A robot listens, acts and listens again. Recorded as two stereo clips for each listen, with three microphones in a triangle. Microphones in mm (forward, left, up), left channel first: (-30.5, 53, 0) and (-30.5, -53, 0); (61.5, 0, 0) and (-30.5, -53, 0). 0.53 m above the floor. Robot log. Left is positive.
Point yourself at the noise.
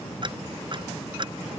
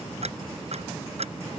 note: The ticking: 135° right.
cmd yaw -135
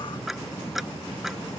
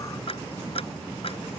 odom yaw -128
end: Found it: ticking, straight ahead.